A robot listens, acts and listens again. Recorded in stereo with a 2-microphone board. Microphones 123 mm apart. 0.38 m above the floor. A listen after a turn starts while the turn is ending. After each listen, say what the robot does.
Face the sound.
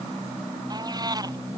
Turn 30° right.
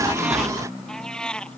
Facing the cat meowing.